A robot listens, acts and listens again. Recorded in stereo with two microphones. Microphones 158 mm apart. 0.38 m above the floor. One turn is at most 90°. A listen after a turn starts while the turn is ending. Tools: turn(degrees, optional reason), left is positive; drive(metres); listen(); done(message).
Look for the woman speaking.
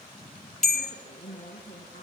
turn(degrees=55, reason="The woman speaking: about 55° left or 125° left.")
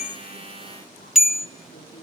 listen()
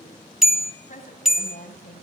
turn(degrees=55, reason="So it is at 55° left.")
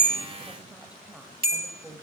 turn(degrees=-10, reason="The woman speaking is now 10° right.")
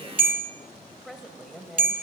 done("Facing the woman speaking.")